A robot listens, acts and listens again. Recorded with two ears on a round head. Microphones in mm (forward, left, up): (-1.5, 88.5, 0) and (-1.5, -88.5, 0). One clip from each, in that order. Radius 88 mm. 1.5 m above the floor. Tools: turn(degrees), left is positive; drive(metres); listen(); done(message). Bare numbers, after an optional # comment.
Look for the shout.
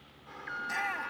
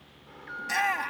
# The shout: about 35° right or 145° right.
turn(-35)
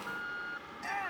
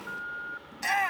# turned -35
# So it is at 110° right.
turn(-110)
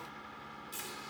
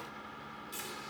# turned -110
listen()
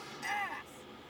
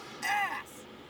# The shout is now 20° right.
turn(-20)
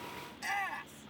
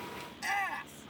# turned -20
done("Facing the shout.")